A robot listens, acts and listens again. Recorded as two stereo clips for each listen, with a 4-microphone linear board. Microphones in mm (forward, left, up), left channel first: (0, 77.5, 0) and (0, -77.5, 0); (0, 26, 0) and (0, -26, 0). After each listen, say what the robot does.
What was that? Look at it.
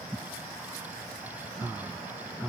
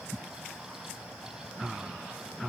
Keep listening.
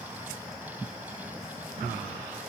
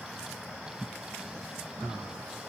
Keep listening.
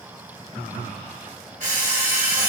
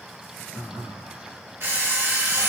Turn 60° right.
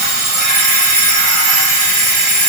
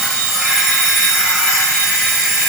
Found it: an alarm clock, straight ahead, 1 to 2 m away.